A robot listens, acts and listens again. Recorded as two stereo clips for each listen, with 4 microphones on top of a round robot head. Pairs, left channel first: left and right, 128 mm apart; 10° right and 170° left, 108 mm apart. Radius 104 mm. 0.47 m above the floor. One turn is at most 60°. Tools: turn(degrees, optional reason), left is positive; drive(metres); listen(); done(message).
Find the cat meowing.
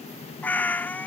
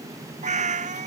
turn(degrees=60, reason="The cat meowing: 170° left.")
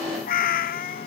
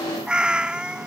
turn(degrees=60, reason="The cat meowing is now 90° left.")
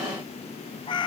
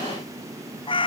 turn(degrees=30, reason="The cat meowing is now 30° left.")
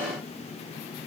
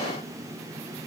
listen()
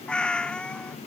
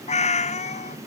done("Found it: a cat meowing, straight ahead.")